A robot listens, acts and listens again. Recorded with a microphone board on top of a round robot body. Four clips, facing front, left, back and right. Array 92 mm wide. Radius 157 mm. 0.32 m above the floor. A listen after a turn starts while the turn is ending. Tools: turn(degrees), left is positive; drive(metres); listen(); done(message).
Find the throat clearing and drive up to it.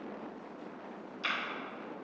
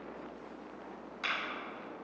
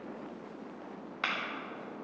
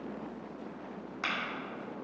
listen()
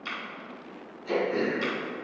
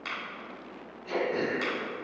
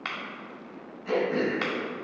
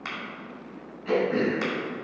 turn(degrees=-120)
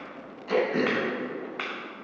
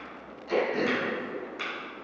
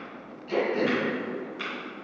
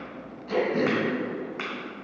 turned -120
turn(degrees=10)
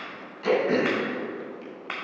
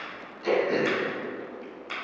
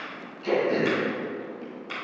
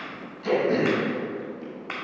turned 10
drive(metres=1.0)
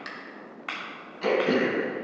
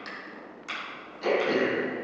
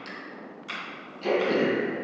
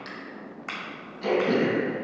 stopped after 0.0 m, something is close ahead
done("Blocked. The throat clearing is further on, straight ahead.")